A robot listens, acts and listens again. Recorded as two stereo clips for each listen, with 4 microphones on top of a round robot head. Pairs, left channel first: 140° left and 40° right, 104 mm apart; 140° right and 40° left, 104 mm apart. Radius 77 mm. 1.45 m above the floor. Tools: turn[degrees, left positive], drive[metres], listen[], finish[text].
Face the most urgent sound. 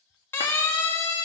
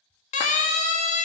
Thought: The siren: 145° right.
Action: turn[-145]
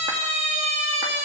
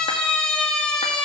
Thought: The siren is now 60° right.
Action: turn[-60]
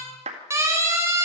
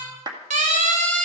Thought: The siren is now 30° left.
Action: turn[30]
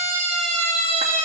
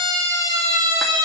Thought: The siren is now 20° right.
Action: turn[-20]
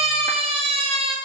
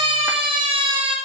Action: finish[Found it: a siren, straight ahead, 2 to 4 m away.]